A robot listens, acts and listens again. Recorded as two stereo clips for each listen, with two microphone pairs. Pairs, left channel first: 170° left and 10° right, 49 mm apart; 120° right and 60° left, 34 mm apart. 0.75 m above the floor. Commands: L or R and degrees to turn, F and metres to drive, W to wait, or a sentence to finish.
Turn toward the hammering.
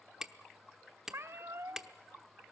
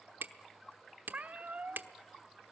L70
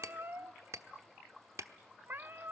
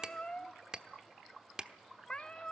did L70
Facing the hammering.